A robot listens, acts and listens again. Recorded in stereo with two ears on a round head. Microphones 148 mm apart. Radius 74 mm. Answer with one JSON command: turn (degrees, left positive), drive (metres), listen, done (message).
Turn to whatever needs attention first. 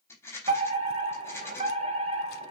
{"turn": -40}
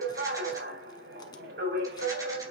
{"turn": -100}
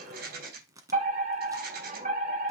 {"turn": -55}
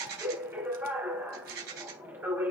{"turn": -15}
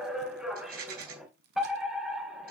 {"done": "Found it: a fire alarm, straight ahead."}